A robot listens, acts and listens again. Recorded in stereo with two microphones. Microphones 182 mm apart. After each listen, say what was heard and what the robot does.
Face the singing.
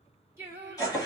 Turn 30° right.
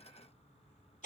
Keep listening.
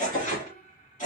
So it is at 50° left. Turn 50° left.
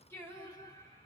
The singing is now 20° left. Turn 20° left.
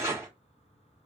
Keep listening.
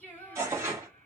The singing is now 10° left. Turn 10° left.
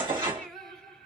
Found it: singing, straight ahead, 2 to 4 m away.